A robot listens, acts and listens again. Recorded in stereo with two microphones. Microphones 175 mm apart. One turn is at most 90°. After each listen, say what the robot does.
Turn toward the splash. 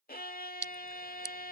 Turn 90° right.
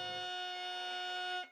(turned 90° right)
I heard a splash from this way, but can't make it out now.